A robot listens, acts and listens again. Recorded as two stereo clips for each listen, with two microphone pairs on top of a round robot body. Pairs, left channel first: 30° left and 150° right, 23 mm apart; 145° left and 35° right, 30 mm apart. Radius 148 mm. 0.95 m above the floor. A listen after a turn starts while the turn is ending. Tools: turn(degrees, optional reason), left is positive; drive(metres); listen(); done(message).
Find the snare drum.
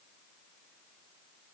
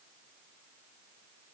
listen()
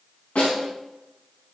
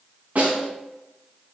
done("Found it: a snare drum, straight ahead, 2 to 4 m away.")